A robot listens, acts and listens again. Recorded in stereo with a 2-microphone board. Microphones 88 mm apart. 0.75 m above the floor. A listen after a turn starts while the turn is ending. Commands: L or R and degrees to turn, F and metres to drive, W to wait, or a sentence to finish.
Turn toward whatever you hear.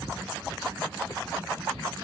W
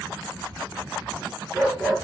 L30
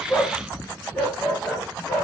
L155
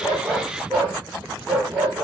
R20
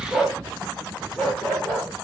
Found it: a dog barking, straight ahead.